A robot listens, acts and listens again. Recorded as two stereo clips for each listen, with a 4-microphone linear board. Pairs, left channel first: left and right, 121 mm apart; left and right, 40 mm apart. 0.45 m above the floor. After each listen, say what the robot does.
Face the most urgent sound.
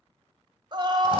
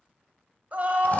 Turn 40° right.
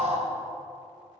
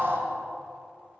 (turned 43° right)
Turn 95° right.
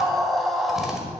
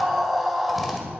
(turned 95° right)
Found it: a scream, straight ahead.